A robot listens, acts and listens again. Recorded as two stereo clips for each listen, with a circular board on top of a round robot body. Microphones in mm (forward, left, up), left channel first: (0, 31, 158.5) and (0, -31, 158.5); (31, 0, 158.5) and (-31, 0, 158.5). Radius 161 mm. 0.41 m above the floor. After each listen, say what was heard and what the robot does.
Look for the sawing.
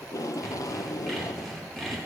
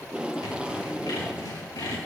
Found it: sawing, straight ahead, over 4 m away.